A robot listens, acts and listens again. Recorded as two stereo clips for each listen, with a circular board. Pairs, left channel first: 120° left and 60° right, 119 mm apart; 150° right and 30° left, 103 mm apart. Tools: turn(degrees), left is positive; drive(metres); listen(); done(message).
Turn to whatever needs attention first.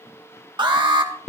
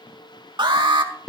turn(degrees=-10)
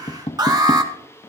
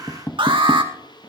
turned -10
done("Found it: an alarm, straight ahead, 1 to 2 m away.")